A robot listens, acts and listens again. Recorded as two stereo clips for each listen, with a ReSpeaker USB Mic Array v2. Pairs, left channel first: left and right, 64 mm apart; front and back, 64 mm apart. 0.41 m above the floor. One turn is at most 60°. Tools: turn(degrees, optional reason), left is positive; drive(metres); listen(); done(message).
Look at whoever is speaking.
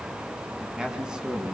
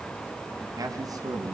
turn(degrees=-60, reason="The man speaking: 165° right.")
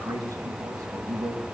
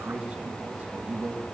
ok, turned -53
turn(degrees=-60, reason="The man speaking is now 110° right.")
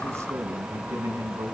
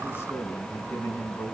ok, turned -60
turn(degrees=-50, reason="The man speaking is now 50° right.")
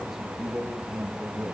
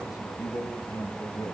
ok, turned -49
done("Facing the man speaking, over 4 m away.")